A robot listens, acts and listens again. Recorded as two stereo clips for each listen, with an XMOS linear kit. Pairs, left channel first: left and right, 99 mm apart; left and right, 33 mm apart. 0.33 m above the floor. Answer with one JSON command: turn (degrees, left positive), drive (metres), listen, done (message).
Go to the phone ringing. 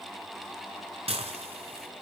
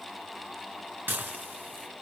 {"listen": true}
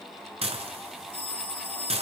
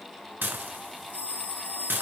{"turn": 65}
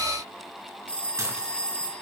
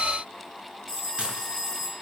{"turn": 10}
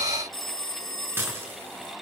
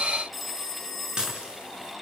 {"drive": 1.0}
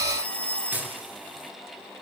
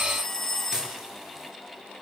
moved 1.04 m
{"turn": 15}
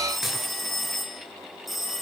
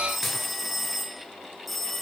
{"drive": 1.0}
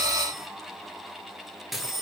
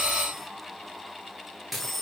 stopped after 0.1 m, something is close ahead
{"done": "Arrived at the phone ringing, straight ahead."}